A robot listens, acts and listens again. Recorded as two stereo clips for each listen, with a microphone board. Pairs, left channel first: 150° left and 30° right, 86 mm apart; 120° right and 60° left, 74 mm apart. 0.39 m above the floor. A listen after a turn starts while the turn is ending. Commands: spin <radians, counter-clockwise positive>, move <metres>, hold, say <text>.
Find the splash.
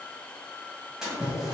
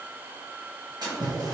spin 0.96
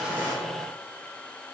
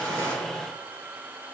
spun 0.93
say Facing where the splash came from. I can't hear it now.